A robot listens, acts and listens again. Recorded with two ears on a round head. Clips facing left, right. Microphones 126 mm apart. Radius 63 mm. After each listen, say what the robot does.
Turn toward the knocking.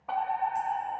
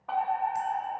Keep listening.
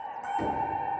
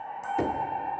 Turn 60° right.
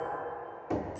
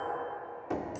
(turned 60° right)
Facing the knocking, 1 to 2 m away.